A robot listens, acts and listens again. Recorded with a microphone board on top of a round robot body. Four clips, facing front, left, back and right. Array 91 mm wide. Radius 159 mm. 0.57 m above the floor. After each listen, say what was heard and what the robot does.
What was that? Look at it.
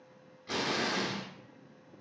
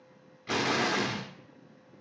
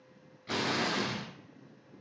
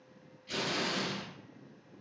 The explosion: 100° left. Turn 100° left.
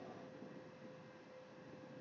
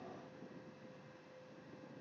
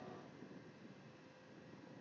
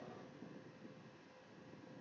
Facing where the explosion came from. I can't hear it now.